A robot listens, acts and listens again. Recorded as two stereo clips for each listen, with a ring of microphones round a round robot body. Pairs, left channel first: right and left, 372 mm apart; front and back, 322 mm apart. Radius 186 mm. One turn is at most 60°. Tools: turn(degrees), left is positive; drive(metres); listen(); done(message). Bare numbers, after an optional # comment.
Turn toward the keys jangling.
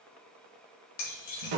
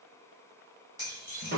# The keys jangling: 100° right.
turn(-60)
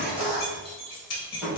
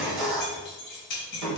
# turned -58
# The keys jangling is now 40° right.
turn(-40)
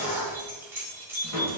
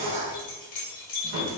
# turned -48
done("Found it: keys jangling, straight ahead, 1 to 2 m away.")